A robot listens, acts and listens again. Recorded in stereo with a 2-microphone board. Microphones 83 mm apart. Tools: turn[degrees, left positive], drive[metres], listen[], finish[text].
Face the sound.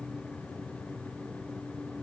Action: listen[]
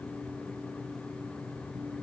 Action: listen[]
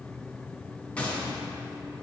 Action: turn[30]
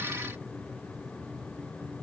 Action: listen[]
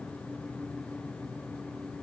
Action: finish[I heard a gunshot, but can't make it out now. It was about 15° right or 135° left.]